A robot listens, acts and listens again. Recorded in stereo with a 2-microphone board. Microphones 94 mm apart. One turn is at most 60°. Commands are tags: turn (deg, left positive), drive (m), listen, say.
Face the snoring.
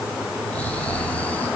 <turn deg="15"/>
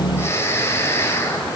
<turn deg="60"/>
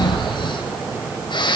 <turn deg="60"/>
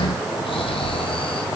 <turn deg="60"/>
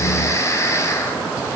<turn deg="35"/>
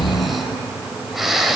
<say>Facing the snoring, over 4 m away.</say>